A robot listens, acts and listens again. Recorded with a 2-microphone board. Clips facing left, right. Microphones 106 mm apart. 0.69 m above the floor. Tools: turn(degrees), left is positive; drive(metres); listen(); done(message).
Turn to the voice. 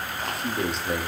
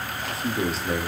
turn(degrees=30)
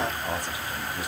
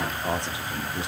turn(degrees=-35)
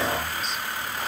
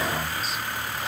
listen()
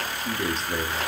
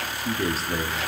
done("Found it: a man speaking, straight ahead, 1 to 2 m away.")